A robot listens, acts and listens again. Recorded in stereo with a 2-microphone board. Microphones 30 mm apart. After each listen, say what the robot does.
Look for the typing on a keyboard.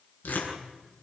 Keep listening.
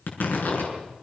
Keep listening.
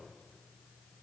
I can't make out typing on a keyboard, only tearing paper.